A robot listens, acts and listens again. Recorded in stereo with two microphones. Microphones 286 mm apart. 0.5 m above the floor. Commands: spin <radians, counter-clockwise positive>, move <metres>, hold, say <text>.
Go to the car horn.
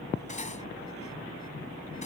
hold
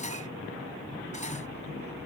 hold
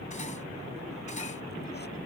say I can't make out a car horn to turn to.